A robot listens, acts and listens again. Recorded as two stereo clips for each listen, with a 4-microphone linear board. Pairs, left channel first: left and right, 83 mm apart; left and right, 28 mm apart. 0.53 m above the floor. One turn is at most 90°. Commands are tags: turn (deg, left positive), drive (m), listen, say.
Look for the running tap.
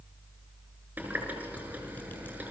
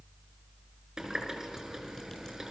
<turn deg="-20"/>
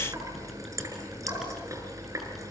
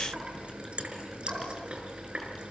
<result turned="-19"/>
<turn deg="-90"/>
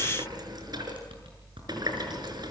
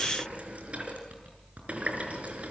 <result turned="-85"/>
<turn deg="-55"/>
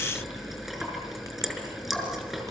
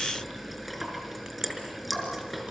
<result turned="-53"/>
<say>Facing the running tap, over 4 m away.</say>